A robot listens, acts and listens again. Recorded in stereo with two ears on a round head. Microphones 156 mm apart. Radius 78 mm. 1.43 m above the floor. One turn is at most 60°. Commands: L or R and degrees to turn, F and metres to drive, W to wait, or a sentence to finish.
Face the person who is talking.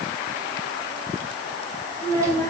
L15
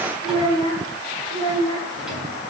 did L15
L60
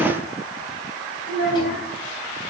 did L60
L60
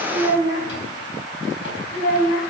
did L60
L55
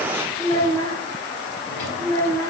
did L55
L20
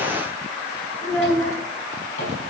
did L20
Facing the child speaking, over 4 m away.